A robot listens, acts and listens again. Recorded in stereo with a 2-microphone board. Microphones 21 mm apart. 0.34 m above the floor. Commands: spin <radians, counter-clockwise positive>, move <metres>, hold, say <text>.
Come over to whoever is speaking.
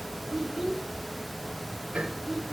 spin -0.35
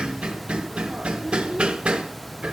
move 1.0
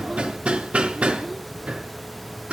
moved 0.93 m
hold
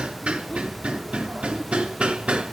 spin 0.17
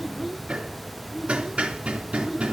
move 1.0
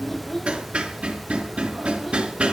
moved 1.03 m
move 1.0
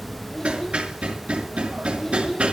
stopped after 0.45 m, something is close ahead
spin 0.26
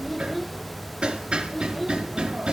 say I am next to the child speaking.